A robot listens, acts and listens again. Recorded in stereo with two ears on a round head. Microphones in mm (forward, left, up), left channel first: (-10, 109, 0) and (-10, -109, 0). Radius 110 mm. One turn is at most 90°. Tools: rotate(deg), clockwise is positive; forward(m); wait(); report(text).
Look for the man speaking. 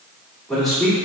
rotate(30)
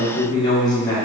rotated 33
rotate(-10)
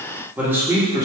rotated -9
rotate(15)
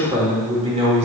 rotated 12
rotate(25)
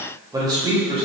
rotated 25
rotate(25)
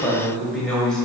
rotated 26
report("Facing the man speaking.")